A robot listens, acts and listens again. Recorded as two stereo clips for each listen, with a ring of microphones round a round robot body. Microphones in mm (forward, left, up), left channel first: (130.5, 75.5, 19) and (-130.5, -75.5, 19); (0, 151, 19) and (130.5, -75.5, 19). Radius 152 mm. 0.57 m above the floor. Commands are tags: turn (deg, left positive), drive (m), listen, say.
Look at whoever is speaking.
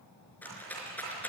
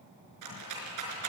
<listen/>
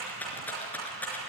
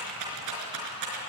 <listen/>
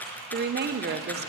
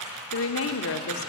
<turn deg="155"/>
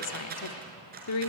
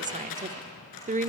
<say>Facing the woman speaking, 1 to 2 m away.</say>